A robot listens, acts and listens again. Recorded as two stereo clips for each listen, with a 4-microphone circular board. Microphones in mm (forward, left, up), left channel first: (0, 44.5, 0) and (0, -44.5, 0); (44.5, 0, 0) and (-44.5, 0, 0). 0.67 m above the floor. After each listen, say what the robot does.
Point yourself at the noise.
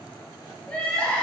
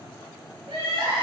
Turn 170° left.
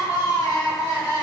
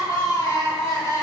Turn 50° left.
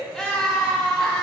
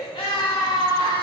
Turn 10° left.
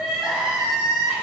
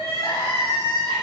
Found it: crying, straight ahead.